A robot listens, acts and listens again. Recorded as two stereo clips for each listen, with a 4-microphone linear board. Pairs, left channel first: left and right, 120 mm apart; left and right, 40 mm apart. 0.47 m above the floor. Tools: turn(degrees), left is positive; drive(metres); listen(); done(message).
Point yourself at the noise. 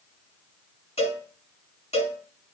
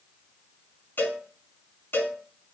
turn(degrees=65)
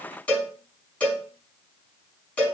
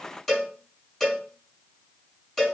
turn(degrees=10)
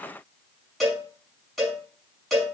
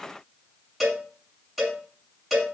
done("Found it: a cowbell, straight ahead.")